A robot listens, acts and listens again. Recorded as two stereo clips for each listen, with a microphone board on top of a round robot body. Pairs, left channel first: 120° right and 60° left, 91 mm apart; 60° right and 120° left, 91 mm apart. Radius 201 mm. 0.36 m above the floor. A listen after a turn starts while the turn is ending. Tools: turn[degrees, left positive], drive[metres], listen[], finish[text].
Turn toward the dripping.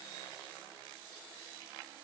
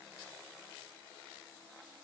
Action: listen[]
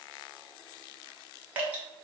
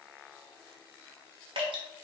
Thought: The dripping: 130° left.
Action: turn[130]
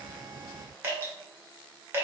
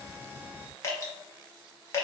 Action: finish[Facing the dripping.]